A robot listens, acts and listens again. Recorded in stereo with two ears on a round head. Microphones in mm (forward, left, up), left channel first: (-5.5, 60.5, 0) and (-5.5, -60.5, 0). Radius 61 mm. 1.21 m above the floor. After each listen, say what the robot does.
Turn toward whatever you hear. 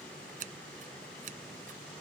Turn 60° right.
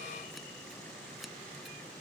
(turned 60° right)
Keep listening.
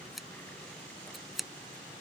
Found it: scissors, straight ahead.